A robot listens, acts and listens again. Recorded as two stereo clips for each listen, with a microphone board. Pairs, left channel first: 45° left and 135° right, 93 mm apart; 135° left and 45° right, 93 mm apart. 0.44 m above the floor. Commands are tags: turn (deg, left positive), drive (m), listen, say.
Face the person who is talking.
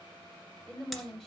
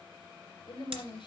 <turn deg="130"/>
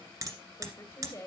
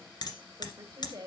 <turn deg="-15"/>
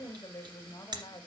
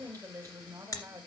<say>Found it: a woman speaking, straight ahead.</say>